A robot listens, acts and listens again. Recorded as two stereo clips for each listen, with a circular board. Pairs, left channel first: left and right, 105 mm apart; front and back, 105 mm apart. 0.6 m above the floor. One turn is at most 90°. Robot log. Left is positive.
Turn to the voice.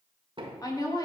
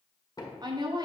note: The woman speaking: 140° left.
cmd yaw +90
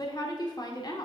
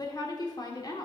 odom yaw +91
note: The woman speaking is now 45° left.
cmd yaw +45
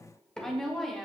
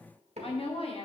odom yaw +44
end: Facing the woman speaking, 1 to 2 m away.